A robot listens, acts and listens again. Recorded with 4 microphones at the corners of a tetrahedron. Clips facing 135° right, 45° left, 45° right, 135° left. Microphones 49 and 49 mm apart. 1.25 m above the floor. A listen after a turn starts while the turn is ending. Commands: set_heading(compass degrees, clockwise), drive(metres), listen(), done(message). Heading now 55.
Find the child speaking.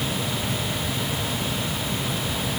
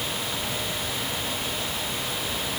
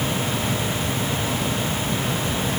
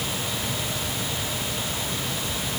listen()
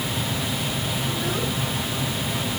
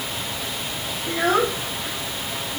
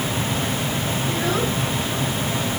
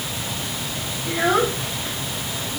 set_heading(335)
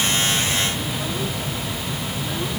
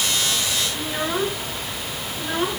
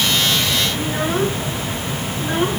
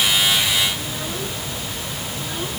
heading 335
done("Found it: a child speaking, straight ahead.")